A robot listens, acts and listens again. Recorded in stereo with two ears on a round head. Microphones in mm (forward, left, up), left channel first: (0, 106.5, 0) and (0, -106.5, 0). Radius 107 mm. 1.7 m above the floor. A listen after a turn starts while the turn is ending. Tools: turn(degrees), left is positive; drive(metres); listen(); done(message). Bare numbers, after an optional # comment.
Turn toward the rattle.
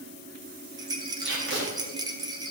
# The rattle: about 15° right or 165° right.
turn(-15)
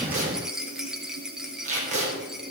done("Found it: a rattle, straight ahead.")